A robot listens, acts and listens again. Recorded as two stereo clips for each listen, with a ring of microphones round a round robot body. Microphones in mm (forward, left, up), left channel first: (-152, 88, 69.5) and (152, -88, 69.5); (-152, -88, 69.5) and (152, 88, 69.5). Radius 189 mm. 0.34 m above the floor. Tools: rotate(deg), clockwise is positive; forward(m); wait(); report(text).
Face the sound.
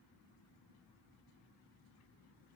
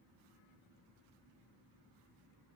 wait()
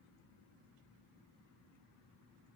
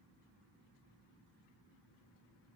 wait()
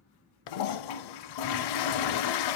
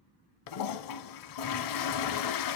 rotate(-175)
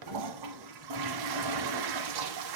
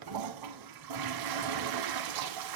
report("Facing the toilet flushing, under 1 m away.")